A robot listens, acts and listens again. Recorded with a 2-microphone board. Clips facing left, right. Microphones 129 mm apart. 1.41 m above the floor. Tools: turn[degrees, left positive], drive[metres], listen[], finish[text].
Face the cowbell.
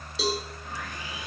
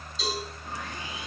Thought: The cowbell: about 70° left or 110° left.
Action: turn[70]
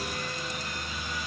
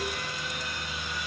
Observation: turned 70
Action: listen[]
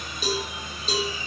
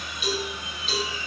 Thought: So it is at 35° left.
Action: turn[35]
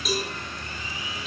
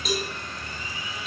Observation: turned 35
Action: finish[Facing the cowbell, 2 to 4 m away.]